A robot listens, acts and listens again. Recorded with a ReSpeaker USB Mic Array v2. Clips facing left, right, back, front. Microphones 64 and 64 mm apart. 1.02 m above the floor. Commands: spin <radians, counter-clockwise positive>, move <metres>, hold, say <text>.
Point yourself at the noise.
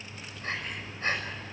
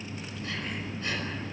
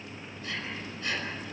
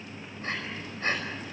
spin 0.79
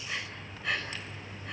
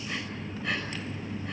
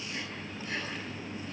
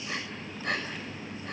say Found it: breathing, straight ahead.